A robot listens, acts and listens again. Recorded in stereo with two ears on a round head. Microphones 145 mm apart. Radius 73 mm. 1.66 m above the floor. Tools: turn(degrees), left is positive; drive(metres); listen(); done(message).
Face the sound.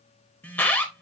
turn(degrees=30)
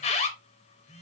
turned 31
turn(degrees=135)
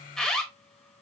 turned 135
done("Facing the alarm, under 1 m away.")